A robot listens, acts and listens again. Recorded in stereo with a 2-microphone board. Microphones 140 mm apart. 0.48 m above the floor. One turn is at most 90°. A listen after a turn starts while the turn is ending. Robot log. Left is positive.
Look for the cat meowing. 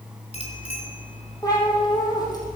note: The cat meowing: about 30° left or 150° left.
cmd yaw +30
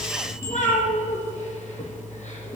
note: So it is at 120° left.
cmd yaw +90
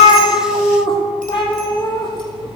note: The cat meowing is now 35° left.
cmd yaw +35
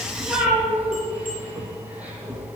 note: The cat meowing is now 10° right.
cmd yaw -10
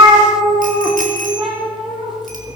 end: Facing the cat meowing, 2 to 4 m away.